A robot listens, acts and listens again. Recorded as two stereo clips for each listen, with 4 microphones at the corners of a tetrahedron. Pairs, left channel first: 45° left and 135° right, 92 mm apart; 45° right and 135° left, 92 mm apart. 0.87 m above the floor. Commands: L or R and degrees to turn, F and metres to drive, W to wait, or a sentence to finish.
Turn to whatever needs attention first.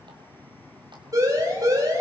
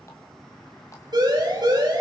L175
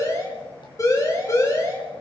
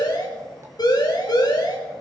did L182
Facing the siren.